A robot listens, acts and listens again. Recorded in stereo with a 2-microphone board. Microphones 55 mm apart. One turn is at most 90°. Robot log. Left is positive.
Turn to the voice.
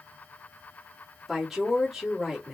cmd yaw -30
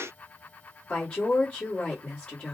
note: So it is at 25° left.
cmd yaw +25
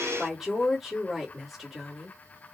end: Facing the woman speaking.